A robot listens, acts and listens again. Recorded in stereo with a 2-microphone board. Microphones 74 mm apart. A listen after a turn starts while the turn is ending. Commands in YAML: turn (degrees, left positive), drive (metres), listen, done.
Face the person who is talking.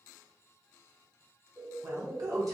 turn: -55
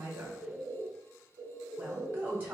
turn: -30
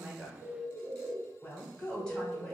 turn: 15
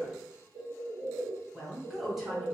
done: "Facing the woman speaking."